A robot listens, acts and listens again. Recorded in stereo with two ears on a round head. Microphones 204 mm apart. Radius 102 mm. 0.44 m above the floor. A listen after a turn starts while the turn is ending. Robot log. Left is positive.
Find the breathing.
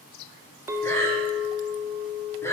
cmd yaw +30
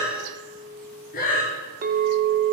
note: So it is at 140° left.
cmd yaw +140
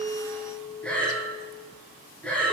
end: Facing the breathing.